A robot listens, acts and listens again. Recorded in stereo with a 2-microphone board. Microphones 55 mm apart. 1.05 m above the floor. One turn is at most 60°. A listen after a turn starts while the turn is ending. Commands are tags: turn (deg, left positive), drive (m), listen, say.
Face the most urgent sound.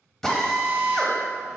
<listen/>
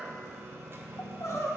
<turn deg="60"/>
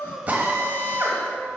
<listen/>
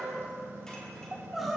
<say>Found it: crying, straight ahead.</say>